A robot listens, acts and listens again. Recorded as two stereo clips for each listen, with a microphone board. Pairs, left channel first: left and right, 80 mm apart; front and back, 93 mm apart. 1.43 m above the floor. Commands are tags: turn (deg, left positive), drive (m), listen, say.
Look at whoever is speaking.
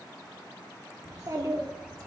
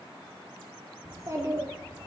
<turn deg="-130"/>
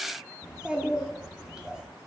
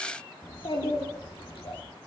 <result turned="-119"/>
<turn deg="-10"/>
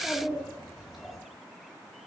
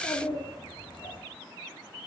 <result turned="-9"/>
<say>Found it: a child speaking, straight ahead, 1 to 2 m away.</say>